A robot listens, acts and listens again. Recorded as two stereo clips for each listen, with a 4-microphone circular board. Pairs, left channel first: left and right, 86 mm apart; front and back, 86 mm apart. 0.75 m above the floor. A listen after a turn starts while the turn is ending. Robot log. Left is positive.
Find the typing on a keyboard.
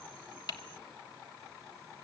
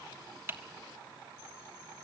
note: The typing on a keyboard: 120° left.
cmd yaw +120
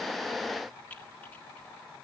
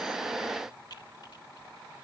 note: The typing on a keyboard is now 20° left.
cmd yaw +20
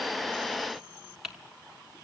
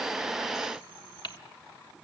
end: Facing the typing on a keyboard, 1 to 2 m away.